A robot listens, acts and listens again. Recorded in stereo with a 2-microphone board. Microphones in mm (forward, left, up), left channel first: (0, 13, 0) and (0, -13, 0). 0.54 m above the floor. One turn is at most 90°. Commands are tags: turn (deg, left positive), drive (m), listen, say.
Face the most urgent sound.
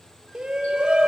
<turn deg="-40"/>
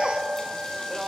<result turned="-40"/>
<say>Facing the shout, 2 to 4 m away.</say>